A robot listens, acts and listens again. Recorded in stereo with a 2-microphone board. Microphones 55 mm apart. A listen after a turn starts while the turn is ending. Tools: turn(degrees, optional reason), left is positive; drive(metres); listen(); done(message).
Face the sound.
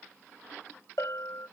turn(degrees=65, reason="The bell: about 65° left or 115° left.")
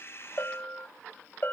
turn(degrees=40, reason="So it is at 40° left.")
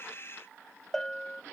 turn(degrees=10, reason="The bell is now 10° left.")
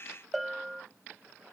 done("Found it: a bell, straight ahead.")